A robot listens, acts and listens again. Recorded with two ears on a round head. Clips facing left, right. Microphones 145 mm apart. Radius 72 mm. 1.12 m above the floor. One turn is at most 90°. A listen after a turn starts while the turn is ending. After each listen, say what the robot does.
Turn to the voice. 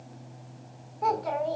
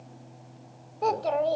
Turn 35° right.
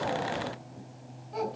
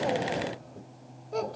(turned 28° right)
Turn 90° right.
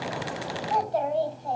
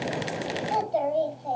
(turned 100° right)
Turn 20° right.
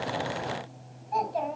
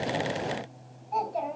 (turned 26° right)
Found it: a child speaking, straight ahead.